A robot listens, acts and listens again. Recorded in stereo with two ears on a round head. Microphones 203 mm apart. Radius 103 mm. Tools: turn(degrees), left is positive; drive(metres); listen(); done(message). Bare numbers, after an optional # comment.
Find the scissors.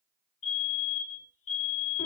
listen()
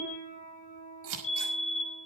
# The scissors: about 65° right or 115° right.
turn(-65)
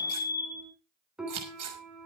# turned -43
# So it is at 70° right.
turn(-70)
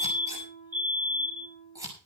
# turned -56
# The scissors is now 15° right.
turn(-15)
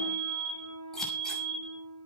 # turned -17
listen()
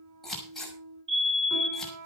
done("Facing the scissors.")